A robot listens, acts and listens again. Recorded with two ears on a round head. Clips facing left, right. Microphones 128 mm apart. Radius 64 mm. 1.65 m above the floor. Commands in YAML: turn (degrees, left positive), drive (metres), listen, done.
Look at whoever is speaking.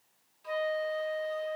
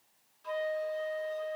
listen: true
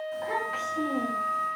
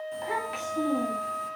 turn: -15
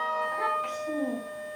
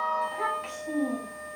done: "Facing the child speaking."